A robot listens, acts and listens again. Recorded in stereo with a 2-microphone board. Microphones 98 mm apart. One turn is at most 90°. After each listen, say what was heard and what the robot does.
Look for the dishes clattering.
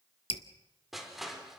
Keep listening.
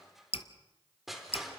Keep listening.
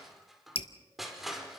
I can't make out dishes clattering to turn to.